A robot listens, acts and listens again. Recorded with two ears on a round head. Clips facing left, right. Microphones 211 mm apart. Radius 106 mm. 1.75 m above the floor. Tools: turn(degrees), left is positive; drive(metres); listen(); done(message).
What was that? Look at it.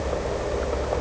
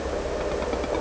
listen()
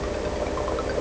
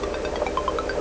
listen()
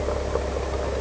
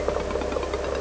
done("I can't make out anything.")